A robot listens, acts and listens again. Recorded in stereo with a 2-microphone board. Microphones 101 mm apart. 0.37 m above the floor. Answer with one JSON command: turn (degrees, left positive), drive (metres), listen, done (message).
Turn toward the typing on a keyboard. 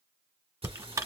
{"turn": -35}
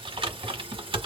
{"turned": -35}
{"turn": -110}
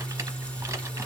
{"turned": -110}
{"listen": true}
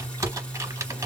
{"turn": -30}
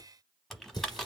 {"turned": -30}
{"done": "Facing the typing on a keyboard."}